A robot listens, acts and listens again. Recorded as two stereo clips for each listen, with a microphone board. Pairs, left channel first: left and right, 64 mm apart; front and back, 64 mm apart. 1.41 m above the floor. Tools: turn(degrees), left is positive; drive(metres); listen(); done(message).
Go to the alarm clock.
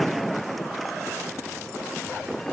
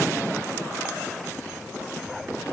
listen()
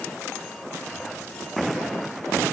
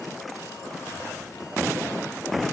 listen()
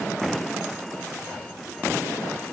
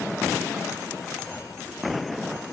done("I can't make out an alarm clock.")